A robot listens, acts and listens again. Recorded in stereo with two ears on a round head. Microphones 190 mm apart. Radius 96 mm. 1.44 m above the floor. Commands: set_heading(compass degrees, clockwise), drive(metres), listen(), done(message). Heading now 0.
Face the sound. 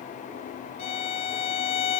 set_heading(330)
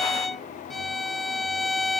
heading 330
done("Facing the violin.")